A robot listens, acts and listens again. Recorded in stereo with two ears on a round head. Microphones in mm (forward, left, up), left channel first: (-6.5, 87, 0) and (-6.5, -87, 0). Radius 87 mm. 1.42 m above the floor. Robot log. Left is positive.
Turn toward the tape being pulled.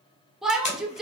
note: The tape being pulled: about 35° left or 145° left.
cmd yaw +35
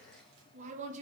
cmd idle
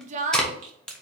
end: Found it: tape being pulled, straight ahead.